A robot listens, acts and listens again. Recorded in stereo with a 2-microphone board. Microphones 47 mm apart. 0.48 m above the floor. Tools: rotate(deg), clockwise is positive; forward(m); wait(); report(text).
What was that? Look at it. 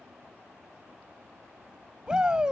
rotate(15)
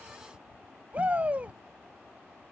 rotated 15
rotate(150)
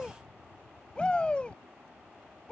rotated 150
rotate(-25)
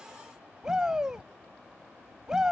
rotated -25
rotate(15)
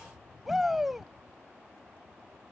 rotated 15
report("Found it: a shout, straight ahead.")